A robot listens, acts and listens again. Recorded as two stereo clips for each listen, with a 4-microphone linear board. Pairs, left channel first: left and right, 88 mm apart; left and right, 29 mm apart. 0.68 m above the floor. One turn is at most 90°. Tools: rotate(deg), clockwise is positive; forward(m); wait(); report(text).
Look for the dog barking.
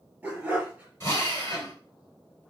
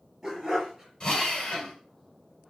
rotate(30)
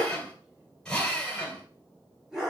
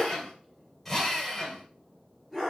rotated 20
rotate(30)
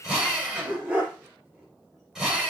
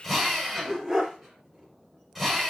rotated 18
rotate(15)
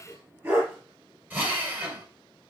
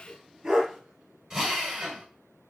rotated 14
rotate(25)
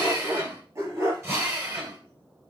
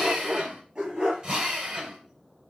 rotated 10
rotate(35)
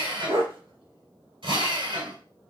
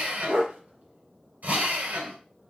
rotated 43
rotate(90)
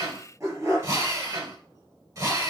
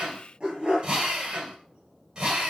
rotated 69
rotate(30)
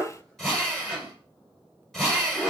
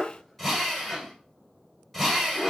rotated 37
report("Found it: a dog barking, straight ahead, 2 to 4 m away.")